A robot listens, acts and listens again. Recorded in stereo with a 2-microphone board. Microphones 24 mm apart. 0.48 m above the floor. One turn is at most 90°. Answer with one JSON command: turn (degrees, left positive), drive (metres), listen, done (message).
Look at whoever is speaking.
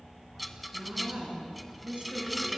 {"turn": -65}
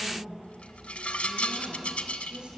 {"turn": -50}
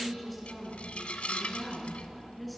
{"done": "Facing the woman speaking."}